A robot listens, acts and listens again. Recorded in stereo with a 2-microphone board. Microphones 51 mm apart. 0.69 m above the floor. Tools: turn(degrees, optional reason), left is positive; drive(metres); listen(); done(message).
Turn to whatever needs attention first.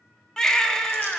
turn(degrees=30)
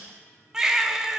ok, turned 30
turn(degrees=-10, reason="So it is at 10° right.")
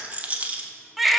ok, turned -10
done("Found it: a baby crying, straight ahead.")